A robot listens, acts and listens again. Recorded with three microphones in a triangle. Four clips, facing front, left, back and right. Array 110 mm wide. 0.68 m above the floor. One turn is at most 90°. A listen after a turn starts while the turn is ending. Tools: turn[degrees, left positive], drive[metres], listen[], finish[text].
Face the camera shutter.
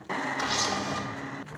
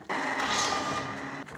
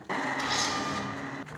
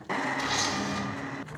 Thought: The camera shutter: 35° left.
Action: turn[35]
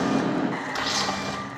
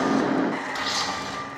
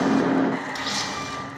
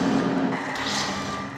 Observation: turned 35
Action: finish[Facing the camera shutter.]